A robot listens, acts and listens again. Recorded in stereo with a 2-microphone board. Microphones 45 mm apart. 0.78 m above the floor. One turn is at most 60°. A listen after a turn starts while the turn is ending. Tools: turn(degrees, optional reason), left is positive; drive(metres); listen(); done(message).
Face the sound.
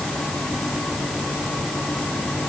listen()
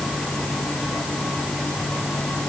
listen()
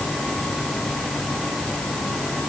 done("I can't make out anything to turn to.")